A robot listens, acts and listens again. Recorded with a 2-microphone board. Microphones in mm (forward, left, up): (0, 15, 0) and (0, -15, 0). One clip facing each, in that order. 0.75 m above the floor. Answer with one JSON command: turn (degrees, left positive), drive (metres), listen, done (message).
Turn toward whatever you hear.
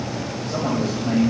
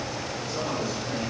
{"turn": 60}
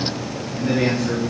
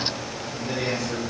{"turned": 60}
{"turn": 60}
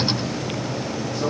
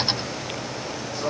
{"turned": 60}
{"listen": true}
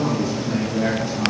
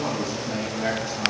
{"done": "Found it: a man speaking, straight ahead, over 4 m away."}